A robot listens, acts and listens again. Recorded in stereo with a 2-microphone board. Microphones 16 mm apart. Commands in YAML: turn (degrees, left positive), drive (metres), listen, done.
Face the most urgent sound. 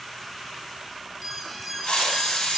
turn: -30
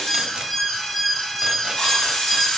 turn: 25
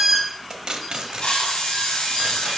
turn: -20
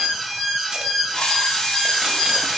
done: "Found it: an alarm, straight ahead."